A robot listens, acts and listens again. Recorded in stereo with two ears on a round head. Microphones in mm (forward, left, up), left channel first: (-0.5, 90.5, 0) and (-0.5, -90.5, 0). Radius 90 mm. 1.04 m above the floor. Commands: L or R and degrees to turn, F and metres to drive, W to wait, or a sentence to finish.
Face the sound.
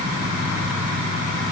W
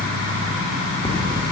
L25
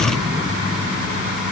W
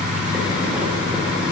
W
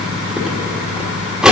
Facing the cutlery clinking, 1 to 2 m away.